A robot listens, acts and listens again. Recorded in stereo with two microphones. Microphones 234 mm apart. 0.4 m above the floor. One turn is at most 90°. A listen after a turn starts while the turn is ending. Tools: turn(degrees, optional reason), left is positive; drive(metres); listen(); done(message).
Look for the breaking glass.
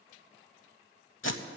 listen()
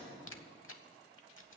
listen()
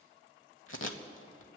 done("I can't make out breaking glass to turn to.")